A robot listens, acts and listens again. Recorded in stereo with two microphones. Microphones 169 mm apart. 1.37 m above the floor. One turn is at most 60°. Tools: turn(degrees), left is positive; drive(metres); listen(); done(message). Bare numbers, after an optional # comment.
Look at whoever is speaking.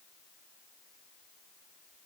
listen()
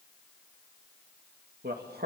turn(-60)
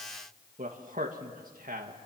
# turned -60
# So it is at 60° right.
turn(-60)
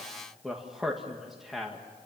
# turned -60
done("Found it: a man speaking, straight ahead, 2 to 4 m away.")